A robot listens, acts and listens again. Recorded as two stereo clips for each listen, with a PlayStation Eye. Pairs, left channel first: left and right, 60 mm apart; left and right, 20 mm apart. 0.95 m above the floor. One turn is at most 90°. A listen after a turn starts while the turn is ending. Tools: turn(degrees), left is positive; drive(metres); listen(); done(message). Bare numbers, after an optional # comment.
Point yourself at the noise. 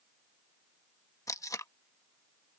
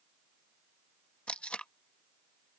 # The tape being pulled: about 70° left or 110° left.
turn(70)
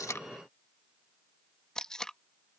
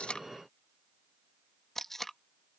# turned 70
# So it is at 15° left.
turn(15)
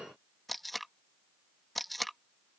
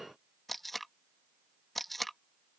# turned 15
done("Found it: tape being pulled, straight ahead.")